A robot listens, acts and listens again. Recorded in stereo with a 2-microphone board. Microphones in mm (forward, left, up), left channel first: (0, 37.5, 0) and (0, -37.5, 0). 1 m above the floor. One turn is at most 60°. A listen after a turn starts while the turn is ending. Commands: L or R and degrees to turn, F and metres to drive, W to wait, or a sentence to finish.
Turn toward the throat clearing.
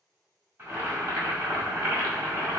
W
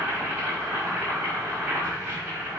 W
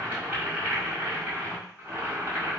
I can't make out throat clearing, only boiling.